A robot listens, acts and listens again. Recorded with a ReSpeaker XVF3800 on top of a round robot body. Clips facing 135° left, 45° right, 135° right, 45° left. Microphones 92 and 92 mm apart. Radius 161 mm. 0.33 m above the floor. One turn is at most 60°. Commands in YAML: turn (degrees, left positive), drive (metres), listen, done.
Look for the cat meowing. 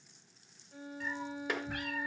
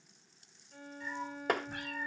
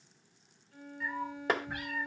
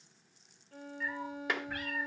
turn: 60
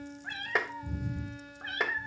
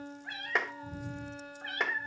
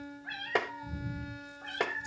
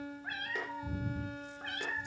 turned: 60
turn: 60
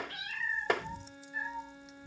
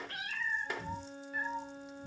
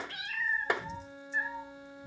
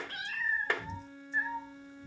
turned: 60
turn: -25
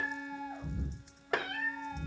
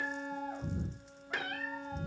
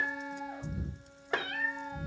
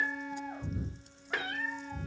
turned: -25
turn: -10
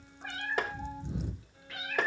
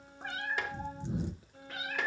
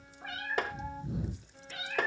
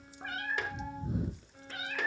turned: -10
done: "Found it: a cat meowing, straight ahead."